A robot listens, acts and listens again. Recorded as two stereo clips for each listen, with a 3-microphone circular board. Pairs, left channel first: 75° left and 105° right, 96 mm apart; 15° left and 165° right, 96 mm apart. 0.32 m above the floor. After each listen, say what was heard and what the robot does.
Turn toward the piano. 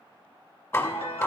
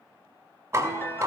The piano: 80° left. Turn 80° left.
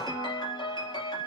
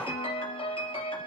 The piano is now 35° left. Turn 35° left.
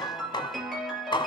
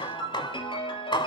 The piano is now 15° right. Turn 15° right.
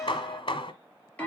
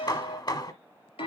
Found it: a piano, straight ahead.